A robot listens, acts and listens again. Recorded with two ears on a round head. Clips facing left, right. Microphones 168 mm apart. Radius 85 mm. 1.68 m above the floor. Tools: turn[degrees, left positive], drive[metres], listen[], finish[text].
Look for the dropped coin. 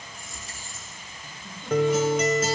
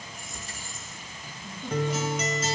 Thought: The dropped coin: about 55° right or 125° right.
Action: turn[-55]
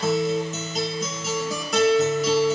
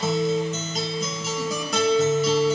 Action: listen[]
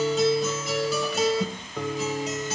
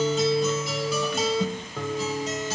Action: finish[I heard a dropped coin, but can't make it out now. It was about straight ahead or 70° right.]